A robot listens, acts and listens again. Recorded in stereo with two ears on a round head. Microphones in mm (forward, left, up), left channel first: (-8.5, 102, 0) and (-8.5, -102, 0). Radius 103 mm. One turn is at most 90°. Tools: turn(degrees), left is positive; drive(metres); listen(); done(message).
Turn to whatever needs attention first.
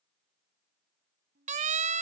turn(degrees=-35)
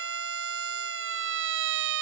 turn(degrees=-90)
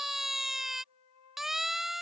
done("Facing the siren.")